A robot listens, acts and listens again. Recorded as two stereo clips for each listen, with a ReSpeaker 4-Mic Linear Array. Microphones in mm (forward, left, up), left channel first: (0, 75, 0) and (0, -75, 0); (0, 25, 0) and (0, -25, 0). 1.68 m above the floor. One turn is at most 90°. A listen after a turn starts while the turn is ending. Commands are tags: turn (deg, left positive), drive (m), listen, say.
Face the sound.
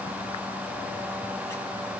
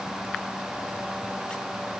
<listen/>
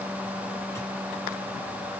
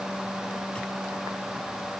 <listen/>
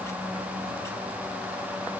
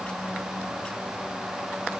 <say>I can't make out anything.</say>